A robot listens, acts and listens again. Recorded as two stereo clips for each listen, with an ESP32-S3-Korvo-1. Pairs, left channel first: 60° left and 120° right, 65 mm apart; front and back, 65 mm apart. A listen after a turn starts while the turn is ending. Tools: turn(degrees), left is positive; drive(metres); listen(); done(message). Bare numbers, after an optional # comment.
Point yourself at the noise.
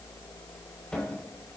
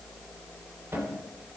# The cupboard door: 135° left.
turn(135)
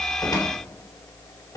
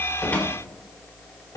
# The cupboard door is now 35° left.
turn(35)
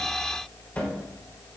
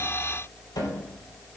# The cupboard door is now 10° right.
turn(-10)
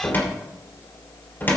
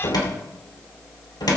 done("Facing the cupboard door.")